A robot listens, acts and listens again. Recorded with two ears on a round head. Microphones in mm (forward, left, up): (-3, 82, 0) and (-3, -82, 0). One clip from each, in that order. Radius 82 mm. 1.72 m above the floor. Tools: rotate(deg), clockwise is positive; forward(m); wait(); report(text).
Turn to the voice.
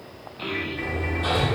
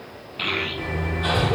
rotate(60)
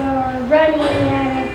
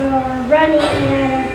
report("Found it: a child speaking, straight ahead.")